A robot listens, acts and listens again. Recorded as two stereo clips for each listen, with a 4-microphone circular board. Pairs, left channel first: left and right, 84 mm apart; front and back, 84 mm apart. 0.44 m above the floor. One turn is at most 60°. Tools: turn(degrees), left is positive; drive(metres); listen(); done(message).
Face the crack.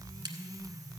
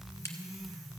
turn(degrees=-55)
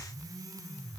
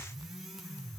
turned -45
turn(degrees=-10)
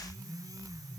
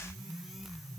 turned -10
done("Facing where the crack came from. I can't hear it now.")